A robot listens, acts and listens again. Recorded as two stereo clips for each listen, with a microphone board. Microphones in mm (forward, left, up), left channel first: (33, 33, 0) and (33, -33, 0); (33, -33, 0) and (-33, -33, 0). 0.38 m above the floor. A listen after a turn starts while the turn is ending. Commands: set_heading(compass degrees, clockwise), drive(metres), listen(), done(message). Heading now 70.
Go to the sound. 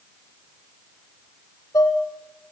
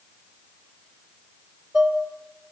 set_heading(315)
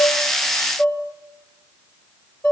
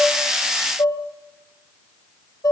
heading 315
set_heading(285)
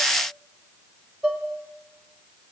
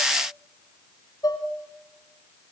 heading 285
drive(1.0)
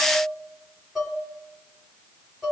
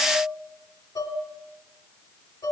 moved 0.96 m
drive(1.0)
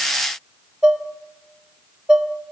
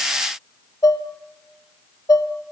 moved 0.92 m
set_heading(300)
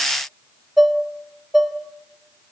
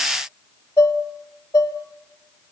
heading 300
drive(1.0)
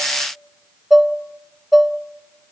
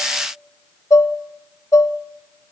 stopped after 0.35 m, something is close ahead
done("Arrived at the dishes clattering, straight ahead.")